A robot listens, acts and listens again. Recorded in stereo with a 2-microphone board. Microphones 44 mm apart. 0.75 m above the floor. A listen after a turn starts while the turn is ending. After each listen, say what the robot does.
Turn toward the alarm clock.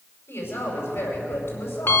Turn 60° left.
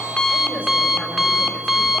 Found it: an alarm clock, straight ahead, under 1 m away.